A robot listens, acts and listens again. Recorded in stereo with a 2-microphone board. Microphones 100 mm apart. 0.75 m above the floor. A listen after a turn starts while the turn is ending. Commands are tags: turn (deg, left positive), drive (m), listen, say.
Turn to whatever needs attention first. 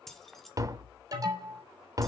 <turn deg="-40"/>
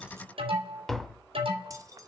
<turn deg="-100"/>
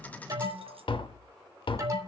<turn deg="-35"/>
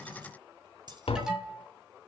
<say>Facing the alarm, 2 to 4 m away.</say>